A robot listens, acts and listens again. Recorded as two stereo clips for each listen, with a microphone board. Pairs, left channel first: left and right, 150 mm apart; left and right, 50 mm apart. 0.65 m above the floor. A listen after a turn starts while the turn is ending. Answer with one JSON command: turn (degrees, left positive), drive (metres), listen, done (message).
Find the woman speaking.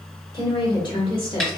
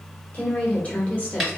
{"turn": 30}
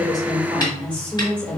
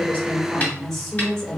{"turn": 10}
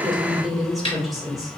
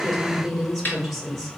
{"done": "Found it: a woman speaking, straight ahead."}